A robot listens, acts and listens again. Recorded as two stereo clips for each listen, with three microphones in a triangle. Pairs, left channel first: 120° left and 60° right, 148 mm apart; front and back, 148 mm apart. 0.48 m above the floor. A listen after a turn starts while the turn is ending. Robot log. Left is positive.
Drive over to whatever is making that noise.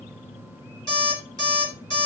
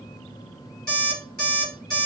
note: The alarm clock: 175° left.
cmd yaw +175
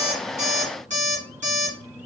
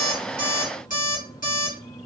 note: The alarm clock is now 25° right.
cmd yaw -25
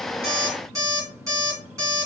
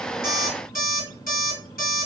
note: The alarm clock is now 10° left.
cmd yaw +10
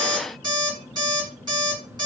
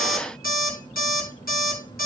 cmd fwd 1.0
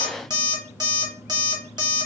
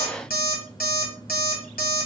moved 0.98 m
cmd fwd 1.0
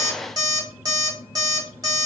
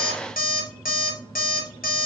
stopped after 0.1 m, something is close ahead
end: Arrived at the alarm clock, straight ahead.